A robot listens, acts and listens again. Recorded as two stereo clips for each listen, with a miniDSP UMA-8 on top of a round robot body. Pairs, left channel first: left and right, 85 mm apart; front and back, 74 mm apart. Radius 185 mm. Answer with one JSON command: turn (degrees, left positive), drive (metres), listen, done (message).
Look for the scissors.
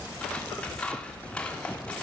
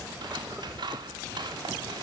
{"turn": 170}
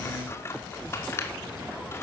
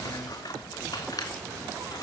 {"turn": 30}
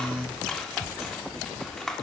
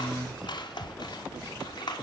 {"done": "Found it: scissors, straight ahead, 2 to 4 m away."}